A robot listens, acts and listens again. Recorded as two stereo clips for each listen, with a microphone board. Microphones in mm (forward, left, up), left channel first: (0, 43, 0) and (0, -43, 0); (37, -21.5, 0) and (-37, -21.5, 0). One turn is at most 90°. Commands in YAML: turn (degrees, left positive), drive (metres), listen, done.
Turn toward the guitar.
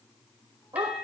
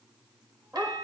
listen: true
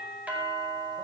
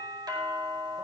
listen: true
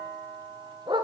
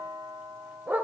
done: "I can't make out a guitar, only a dog barking and a doorbell."